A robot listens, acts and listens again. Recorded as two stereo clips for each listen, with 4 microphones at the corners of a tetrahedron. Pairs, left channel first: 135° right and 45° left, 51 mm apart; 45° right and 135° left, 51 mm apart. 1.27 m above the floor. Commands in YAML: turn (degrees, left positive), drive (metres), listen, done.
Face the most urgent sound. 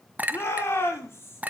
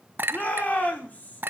turn: -100
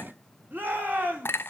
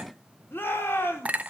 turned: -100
done: "Facing the shout."